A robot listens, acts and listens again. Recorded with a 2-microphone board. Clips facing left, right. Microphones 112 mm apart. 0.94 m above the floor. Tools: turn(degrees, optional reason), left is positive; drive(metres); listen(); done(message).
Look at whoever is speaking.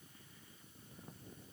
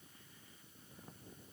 listen()
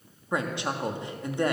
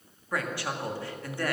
turn(degrees=20, reason="The woman speaking: about 20° left or 160° left.")
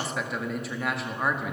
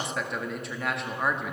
done("Found it: a woman speaking, straight ahead, 1 to 2 m away.")